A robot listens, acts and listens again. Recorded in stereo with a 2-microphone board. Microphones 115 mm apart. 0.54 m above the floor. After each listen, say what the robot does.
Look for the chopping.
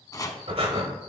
Turn 30° left.
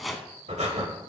Facing the chopping, under 1 m away.